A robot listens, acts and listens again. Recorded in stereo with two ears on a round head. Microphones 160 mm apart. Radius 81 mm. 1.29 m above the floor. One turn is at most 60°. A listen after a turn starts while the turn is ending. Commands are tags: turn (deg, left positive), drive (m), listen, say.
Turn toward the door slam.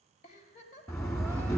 <turn deg="15"/>
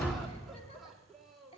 <say>Found it: a door slam, straight ahead.</say>